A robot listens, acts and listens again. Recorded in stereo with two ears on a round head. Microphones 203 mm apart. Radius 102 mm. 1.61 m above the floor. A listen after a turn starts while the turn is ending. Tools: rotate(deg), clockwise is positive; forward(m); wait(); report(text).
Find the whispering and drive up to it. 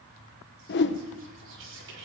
rotate(60)
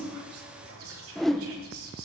rotate(65)
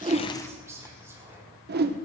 rotate(10)
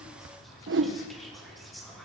forward(1.0)
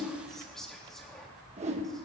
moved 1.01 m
forward(1.0)
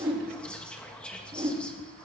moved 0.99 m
forward(1.0)
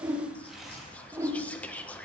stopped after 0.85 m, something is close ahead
report("Arrived at the whispering, straight ahead.")